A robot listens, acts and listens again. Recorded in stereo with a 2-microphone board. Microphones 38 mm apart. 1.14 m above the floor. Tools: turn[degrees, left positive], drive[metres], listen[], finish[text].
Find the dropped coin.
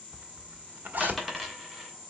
Action: turn[30]
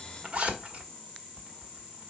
Action: listen[]
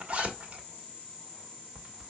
Action: finish[I heard a dropped coin, but can't make it out now. It was about 30° right or 150° left.]